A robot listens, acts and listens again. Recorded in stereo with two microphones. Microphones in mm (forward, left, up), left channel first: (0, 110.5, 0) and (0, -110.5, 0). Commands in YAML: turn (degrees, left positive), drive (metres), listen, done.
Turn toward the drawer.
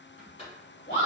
turn: 25
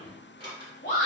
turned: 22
turn: 130
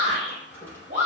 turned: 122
turn: 10
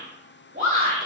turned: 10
listen: true
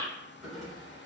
done: "Found it: a drawer, straight ahead, 1 to 2 m away."